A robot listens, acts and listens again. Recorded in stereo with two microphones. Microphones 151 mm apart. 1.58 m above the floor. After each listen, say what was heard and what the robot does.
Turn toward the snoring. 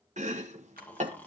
Turn 30° left.
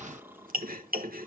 So it is at 15° right. Turn 15° right.
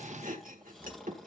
Facing the snoring.